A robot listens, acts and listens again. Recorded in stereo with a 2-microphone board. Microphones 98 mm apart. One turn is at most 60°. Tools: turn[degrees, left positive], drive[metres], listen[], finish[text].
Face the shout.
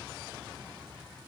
Action: listen[]
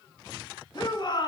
Thought: The shout: about 50° left or 130° left.
Action: turn[50]
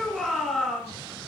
Action: finish[Found it: a shout, straight ahead.]